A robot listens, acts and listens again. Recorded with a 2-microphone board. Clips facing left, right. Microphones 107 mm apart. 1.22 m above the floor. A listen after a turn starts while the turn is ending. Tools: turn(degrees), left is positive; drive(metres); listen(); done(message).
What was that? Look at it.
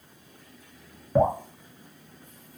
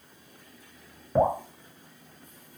turn(degrees=30)
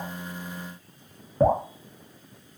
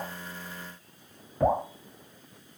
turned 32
turn(degrees=150)
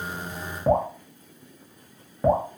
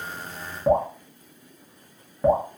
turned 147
done("Found it: dripping, straight ahead.")